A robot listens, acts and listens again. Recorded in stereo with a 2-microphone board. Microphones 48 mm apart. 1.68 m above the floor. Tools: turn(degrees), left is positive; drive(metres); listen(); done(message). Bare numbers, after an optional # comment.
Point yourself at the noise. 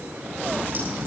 # The crack: about 40° right or 140° right.
turn(-40)
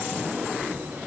listen()
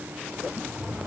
done("I heard a crack, but can't make it out now. It was about straight ahead or 100° right.")